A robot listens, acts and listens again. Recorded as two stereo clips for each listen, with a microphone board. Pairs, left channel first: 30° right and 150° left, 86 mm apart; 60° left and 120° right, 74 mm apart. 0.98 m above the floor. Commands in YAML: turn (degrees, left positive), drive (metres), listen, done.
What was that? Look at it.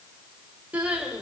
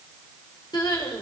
turn: 75
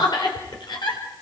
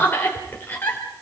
done: "Found it: crying, straight ahead, 2 to 4 m away."